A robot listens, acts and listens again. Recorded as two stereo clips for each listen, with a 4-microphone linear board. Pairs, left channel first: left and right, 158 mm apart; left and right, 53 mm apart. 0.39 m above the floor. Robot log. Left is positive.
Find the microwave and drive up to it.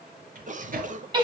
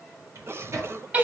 note: The microwave: about 60° right or 120° right.
cmd yaw -60
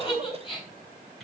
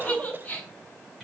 cmd idle
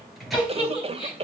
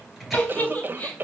cmd fwd 1.0
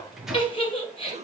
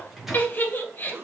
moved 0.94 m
cmd fwd 1.0
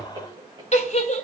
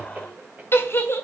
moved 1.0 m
cmd idle
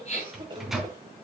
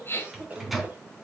cmd fwd 1.0
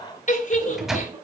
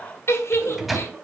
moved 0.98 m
cmd fwd 1.0
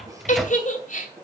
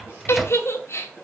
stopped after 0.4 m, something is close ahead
end: I am next to the microwave.